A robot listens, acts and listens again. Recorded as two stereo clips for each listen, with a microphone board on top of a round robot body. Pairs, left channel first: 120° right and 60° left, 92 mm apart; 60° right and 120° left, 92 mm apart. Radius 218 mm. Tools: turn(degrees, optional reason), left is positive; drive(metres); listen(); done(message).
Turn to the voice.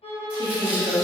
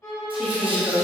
turn(degrees=35, reason="The woman speaking: 35° left.")
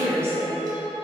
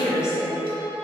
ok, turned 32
done("Found it: a woman speaking, straight ahead, 1 to 2 m away.")